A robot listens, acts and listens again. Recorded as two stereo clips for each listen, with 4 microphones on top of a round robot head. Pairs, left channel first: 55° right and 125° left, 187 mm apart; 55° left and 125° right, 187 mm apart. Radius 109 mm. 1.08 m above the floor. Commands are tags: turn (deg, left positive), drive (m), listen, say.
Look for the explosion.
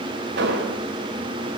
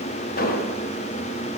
<turn deg="95"/>
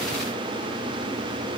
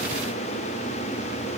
<say>Facing where the explosion came from. I can't hear it now.</say>